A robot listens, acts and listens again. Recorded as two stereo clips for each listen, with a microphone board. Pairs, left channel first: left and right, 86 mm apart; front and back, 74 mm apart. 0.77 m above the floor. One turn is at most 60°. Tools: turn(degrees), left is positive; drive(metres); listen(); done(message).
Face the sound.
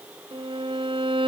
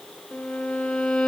turn(degrees=-60)
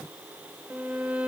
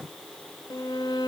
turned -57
turn(degrees=-15)
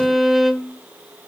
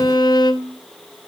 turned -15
done("Facing the violin, 1 to 2 m away.")